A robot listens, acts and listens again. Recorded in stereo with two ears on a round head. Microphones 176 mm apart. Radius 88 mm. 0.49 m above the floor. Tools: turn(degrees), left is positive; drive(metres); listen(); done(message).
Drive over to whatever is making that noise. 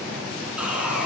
turn(degrees=-30)
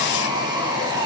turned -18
turn(degrees=-155)
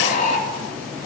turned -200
turn(degrees=45)
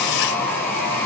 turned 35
turn(degrees=10)
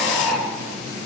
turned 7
drive(metres=1.0)
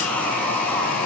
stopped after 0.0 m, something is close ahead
done("Something is in my way. I am facing the sawing but have not reached it.")